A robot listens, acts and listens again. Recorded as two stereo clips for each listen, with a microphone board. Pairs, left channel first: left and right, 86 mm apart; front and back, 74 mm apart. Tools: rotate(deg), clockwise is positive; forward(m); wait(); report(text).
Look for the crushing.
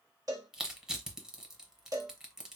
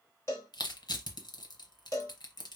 rotate(10)
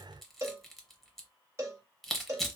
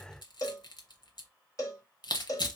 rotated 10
report("Facing the crushing, 1 to 2 m away.")